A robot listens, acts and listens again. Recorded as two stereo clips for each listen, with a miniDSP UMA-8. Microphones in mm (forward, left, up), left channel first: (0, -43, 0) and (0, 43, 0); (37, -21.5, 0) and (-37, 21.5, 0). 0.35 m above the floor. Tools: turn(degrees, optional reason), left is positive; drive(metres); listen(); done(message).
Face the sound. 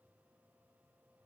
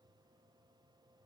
listen()
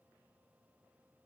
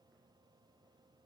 listen()
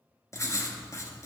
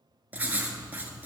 turn(degrees=-140, reason="The writing: 140° right.")
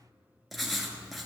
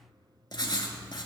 done("Facing the writing, under 1 m away.")